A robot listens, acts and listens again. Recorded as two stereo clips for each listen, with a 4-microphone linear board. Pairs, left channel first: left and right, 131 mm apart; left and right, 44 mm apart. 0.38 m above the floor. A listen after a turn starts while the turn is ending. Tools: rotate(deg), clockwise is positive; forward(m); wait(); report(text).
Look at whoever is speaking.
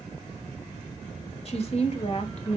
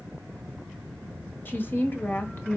rotate(-55)
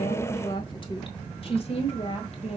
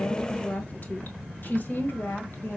rotate(-55)
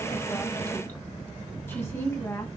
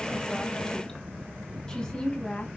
rotate(-20)
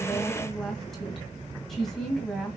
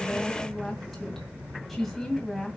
report("Found it: a woman speaking, straight ahead, 2 to 4 m away.")